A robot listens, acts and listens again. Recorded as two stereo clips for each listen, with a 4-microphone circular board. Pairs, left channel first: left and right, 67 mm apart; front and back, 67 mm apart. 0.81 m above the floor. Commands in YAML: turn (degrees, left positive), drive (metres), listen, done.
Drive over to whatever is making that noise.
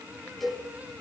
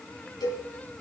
drive: 1.0
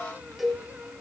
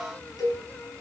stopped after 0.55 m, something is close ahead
done: "Something is in my way. I am facing the cowbell but have not reached it."